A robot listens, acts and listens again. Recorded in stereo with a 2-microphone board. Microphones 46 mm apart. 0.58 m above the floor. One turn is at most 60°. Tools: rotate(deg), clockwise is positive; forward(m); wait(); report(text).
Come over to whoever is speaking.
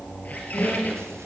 wait()
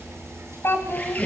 rotate(-55)
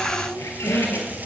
wait()
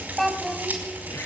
forward(1.0)
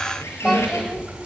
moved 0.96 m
wait()
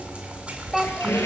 forward(1.0)
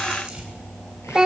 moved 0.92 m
rotate(15)
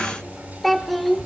forward(1.0)
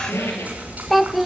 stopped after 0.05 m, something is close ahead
report("I am next to the child speaking.")